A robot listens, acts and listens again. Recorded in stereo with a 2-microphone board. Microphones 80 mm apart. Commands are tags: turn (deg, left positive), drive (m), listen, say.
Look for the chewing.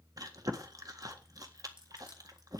<turn deg="-50"/>
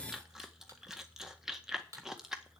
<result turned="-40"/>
<say>Facing the chewing, 1 to 2 m away.</say>